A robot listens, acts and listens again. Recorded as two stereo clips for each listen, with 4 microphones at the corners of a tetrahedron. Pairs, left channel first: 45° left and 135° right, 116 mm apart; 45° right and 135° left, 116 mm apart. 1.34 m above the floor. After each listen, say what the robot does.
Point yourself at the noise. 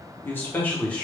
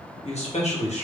Turn 35° right.
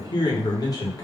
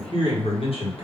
Turn 15° right.
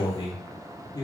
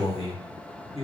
Turn 10° right.
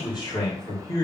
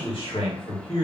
Turn 15° right.
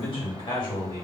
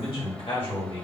Facing the man speaking.